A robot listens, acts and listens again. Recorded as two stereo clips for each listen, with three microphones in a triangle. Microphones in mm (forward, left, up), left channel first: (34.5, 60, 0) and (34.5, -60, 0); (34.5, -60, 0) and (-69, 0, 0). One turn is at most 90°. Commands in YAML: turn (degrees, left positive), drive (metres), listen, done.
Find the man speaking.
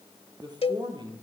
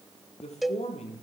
turn: -40
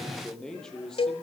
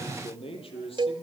done: "Found it: a man speaking, straight ahead."